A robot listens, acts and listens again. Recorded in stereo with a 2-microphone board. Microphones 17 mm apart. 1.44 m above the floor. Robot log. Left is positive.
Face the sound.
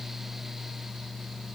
cmd idle
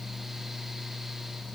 cmd idle
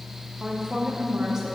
note: The woman speaking: about 30° right or 150° right.
cmd yaw -30
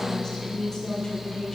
note: So it is at 35° left.
cmd yaw +35
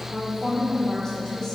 note: The woman speaking is now 15° left.
cmd yaw +15
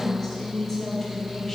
end: Found it: a woman speaking, straight ahead, 1 to 2 m away.